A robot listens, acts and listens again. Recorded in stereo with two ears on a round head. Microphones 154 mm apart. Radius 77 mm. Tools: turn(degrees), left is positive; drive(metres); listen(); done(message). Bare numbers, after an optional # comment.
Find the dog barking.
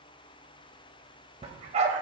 # The dog barking: about 40° right or 140° right.
turn(-40)
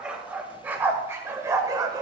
# So it is at 25° right.
turn(-25)
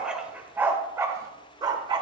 # The dog barking is now 30° right.
turn(-30)
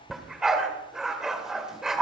done("Found it: a dog barking, straight ahead.")